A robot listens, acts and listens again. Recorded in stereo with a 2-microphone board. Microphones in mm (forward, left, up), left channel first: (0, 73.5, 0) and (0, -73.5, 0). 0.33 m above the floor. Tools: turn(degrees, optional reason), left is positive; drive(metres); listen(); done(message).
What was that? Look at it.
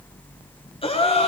turn(degrees=40, reason="The gasp: about 40° left or 140° left.")
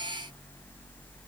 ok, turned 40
listen()
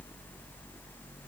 done("I heard a gasp, but can't make it out now. It was about straight ahead or 100° left.")